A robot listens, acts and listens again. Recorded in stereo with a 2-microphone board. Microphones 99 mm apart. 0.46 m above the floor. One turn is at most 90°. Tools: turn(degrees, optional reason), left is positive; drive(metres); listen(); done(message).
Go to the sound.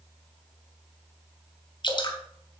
turn(degrees=50, reason="The dripping: about 50° left or 130° left.")
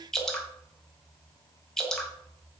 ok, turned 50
drive(metres=1.0)
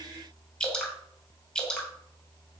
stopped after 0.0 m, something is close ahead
turn(degrees=10, reason="The dripping is now 10° left.")
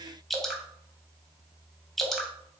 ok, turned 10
done("Blocked. The dripping is further on, straight ahead.")